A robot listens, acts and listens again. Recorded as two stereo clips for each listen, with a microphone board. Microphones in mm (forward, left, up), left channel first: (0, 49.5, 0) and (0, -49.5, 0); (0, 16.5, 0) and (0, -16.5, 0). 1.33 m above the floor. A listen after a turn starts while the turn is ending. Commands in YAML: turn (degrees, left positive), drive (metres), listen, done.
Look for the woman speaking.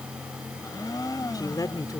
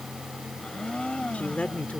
turn: 40
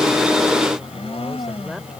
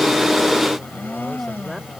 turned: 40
listen: true
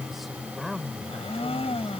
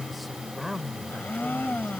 done: "Facing the woman speaking."